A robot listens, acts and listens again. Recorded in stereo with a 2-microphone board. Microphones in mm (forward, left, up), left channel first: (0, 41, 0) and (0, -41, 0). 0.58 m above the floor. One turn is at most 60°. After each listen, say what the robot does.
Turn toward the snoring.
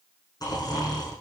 Turn 50° left.
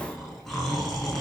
Found it: snoring, straight ahead, over 4 m away.